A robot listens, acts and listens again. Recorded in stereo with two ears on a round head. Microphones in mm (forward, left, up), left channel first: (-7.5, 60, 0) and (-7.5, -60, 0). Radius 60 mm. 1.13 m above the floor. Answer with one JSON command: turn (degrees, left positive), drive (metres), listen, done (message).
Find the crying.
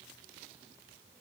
{"listen": true}
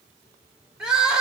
{"turn": -30}
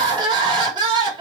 {"turn": -145}
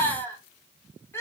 {"turn": 20}
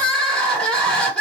{"done": "Facing the crying, 1 to 2 m away."}